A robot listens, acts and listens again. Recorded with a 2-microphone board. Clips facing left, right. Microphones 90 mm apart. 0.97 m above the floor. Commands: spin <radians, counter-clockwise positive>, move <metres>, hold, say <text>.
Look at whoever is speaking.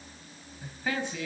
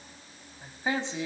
spin -0.35
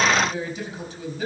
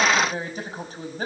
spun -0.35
spin -2.44
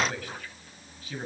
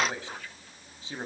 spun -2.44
spin -0.44
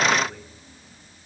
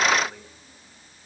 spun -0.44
say Facing the man speaking, over 4 m away.